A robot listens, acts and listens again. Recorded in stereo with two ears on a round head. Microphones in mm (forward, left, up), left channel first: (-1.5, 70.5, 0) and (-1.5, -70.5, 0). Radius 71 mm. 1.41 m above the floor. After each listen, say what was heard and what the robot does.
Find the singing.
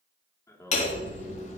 The singing: about 20° left or 160° left. Turn 20° left.
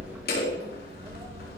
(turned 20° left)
Keep listening.
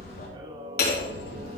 So it is at 30° right. Turn 30° right.
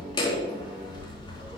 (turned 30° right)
Keep listening.
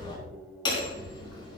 Keep listening.
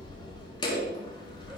I heard singing from this way, but can't make it out now.